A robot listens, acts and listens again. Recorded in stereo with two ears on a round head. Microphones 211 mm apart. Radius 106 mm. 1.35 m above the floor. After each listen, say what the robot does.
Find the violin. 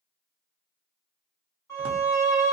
Turn 30° left.
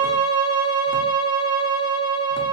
Turn 20° right.
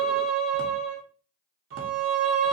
Facing the violin, 1 to 2 m away.